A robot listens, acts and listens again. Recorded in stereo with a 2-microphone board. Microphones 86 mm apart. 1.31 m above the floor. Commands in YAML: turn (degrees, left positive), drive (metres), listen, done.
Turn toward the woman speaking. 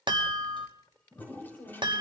turn: 70
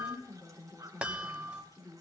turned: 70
turn: 45
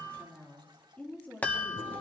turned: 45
turn: 20
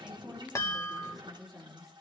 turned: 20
done: "Facing the woman speaking."